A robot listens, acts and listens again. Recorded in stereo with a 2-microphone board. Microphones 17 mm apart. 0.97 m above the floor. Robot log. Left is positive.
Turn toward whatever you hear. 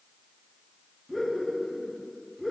cmd yaw -30
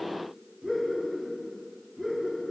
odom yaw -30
note: So it is at 120° right.
cmd yaw -120
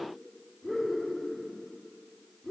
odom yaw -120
note: The laughter is now 35° left.
cmd yaw +35
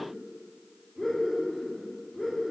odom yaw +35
end: Facing the laughter.